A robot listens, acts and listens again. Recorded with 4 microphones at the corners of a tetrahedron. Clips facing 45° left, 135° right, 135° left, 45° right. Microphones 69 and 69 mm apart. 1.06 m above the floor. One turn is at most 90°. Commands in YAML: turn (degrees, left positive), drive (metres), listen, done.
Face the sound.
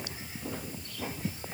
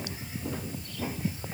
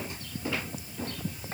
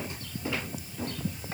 listen: true
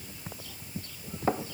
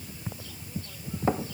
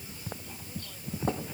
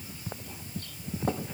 listen: true
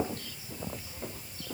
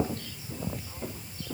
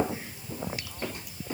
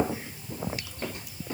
done: "I can't make out anything."